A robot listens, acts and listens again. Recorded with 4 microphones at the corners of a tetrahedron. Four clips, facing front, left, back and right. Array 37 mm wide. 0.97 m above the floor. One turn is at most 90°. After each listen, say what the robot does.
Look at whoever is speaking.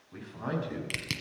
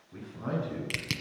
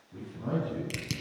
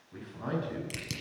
Turn 20° right.
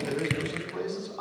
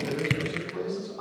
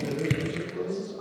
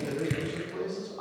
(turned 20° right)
Found it: a man speaking, straight ahead, over 4 m away.